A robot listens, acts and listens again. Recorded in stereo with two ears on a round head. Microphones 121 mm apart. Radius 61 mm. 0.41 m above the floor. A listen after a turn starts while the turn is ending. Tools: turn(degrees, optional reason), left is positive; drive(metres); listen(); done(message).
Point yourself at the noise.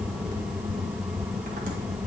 listen()
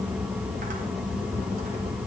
listen()
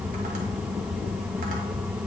done("I can't make out anything.")